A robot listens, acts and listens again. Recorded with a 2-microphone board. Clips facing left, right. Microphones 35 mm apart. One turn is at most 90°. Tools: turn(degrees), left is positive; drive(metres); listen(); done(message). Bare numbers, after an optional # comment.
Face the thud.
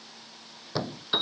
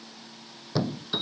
turn(30)
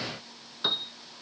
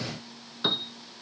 listen()
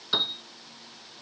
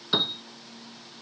done("I heard a thud, but can't make it out now. It was about 25° right or 145° left.")